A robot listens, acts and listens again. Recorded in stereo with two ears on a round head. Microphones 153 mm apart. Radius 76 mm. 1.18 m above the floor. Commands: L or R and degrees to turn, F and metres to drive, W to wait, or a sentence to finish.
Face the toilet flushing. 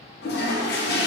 L60
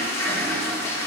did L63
L15
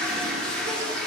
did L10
Facing the toilet flushing.